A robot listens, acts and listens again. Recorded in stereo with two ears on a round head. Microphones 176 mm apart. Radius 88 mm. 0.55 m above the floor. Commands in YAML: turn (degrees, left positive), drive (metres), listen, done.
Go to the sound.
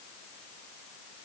listen: true
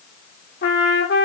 turn: 55
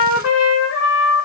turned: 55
turn: 70
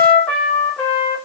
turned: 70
drive: 1.0
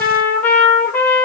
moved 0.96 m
turn: 10
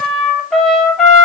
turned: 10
drive: 1.0
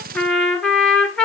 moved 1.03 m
drive: 1.0
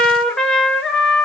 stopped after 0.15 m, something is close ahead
done: "I am next to the trumpet."